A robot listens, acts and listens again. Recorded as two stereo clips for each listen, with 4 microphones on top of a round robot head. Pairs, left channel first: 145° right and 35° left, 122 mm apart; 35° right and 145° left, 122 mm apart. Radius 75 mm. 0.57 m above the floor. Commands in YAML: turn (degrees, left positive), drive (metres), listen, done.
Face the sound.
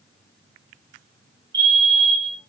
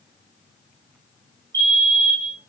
turn: 85
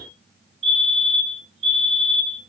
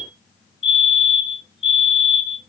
done: "Facing the fire alarm."